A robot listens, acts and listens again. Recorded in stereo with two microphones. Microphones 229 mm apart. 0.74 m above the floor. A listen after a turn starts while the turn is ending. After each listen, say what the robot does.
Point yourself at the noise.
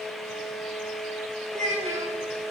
Turn 30° right.
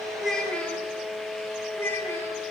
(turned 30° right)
Turn 10° left.
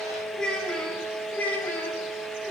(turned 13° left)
Turn 10° left.
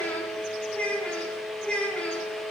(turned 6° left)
Facing the child speaking.